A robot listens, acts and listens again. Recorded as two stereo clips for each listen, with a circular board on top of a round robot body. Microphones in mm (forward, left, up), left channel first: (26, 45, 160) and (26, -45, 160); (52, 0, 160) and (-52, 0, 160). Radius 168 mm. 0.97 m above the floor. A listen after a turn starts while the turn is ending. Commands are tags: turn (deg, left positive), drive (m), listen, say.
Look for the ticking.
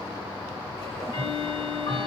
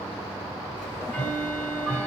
<turn deg="75"/>
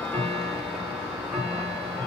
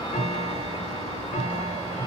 <turn deg="-10"/>
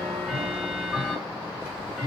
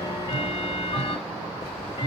<say>Found it: ticking, straight ahead.</say>